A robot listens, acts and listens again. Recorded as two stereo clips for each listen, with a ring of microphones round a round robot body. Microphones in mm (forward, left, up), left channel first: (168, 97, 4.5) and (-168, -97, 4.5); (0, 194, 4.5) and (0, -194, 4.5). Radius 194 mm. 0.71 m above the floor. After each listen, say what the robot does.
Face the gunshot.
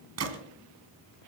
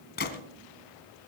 Turn 155° left.
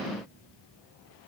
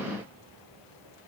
Facing where the gunshot came from. I can't hear it now.